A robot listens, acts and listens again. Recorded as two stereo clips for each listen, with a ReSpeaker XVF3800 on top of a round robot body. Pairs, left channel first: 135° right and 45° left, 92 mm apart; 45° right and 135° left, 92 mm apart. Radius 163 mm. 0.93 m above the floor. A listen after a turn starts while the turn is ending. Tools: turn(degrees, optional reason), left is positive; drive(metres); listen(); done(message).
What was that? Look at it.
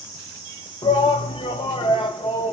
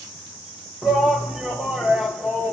turn(degrees=-135, reason="The shout: 135° right.")
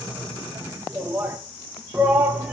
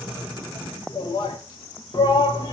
turn(degrees=-25, reason="The shout is now 25° right.")
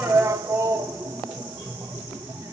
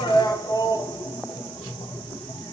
turn(degrees=-10, reason="The shout is now 10° right.")
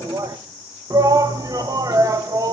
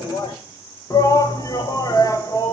done("Found it: a shout, straight ahead, 1 to 2 m away.")